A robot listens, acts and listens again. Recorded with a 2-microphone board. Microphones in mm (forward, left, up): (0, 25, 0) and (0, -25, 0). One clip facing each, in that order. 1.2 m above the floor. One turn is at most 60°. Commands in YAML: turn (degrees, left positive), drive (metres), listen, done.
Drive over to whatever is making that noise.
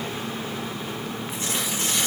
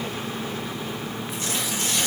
turn: 30
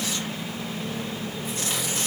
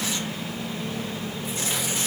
drive: 1.0
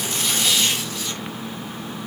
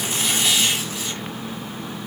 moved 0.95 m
turn: -10
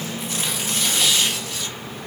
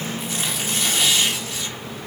drive: 1.0
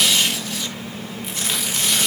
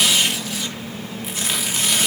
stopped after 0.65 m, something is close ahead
done: "I am next to the tearing paper."